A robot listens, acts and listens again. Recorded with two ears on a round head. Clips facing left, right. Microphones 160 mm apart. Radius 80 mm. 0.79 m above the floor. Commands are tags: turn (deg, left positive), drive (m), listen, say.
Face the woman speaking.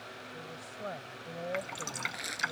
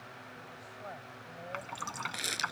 <turn deg="60"/>
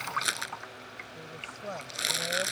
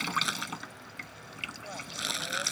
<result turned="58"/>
<turn deg="60"/>
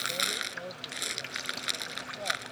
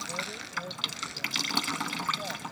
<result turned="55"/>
<listen/>
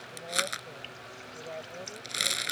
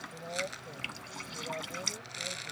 <listen/>
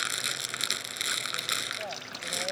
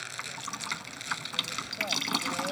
<say>I heard a woman speaking from this way, but can't make it out now.</say>